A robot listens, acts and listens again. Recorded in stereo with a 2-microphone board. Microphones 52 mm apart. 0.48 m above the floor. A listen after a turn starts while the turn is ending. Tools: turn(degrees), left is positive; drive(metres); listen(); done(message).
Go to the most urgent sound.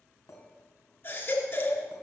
turn(degrees=45)
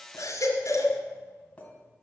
turn(degrees=90)
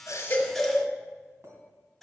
drive(metres=1.0)
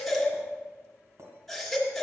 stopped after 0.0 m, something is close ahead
done("Blocked. The baby crying is further on, straight ahead.")